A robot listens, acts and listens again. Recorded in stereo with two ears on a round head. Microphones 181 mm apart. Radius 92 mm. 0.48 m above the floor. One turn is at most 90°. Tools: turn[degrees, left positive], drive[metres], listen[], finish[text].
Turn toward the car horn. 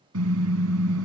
Action: turn[-90]
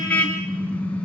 Action: finish[Facing the car horn.]